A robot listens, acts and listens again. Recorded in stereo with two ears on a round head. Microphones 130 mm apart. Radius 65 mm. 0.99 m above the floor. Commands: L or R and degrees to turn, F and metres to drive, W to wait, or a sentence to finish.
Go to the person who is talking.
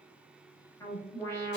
W
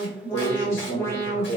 L55
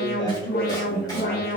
W
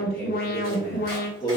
L60
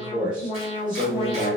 R10
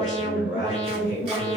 F1.0
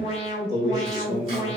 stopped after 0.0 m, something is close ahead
Blocked. The man speaking is further on, straight ahead.